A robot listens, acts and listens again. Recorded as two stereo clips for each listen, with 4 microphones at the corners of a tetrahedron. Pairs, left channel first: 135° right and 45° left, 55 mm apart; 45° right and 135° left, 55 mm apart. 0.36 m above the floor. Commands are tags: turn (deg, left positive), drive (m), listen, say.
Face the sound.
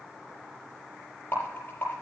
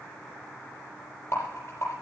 <turn deg="-80"/>
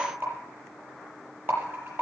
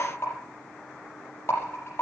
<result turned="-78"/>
<say>Found it: a rattle, straight ahead.</say>